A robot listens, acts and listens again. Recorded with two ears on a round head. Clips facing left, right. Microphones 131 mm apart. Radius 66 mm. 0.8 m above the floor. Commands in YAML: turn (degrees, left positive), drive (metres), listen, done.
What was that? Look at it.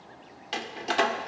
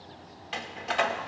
turn: 45
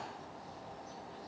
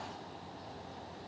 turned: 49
listen: true
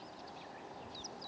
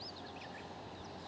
done: "I heard a door slam, but can't make it out now. It was about 5° right or 85° left."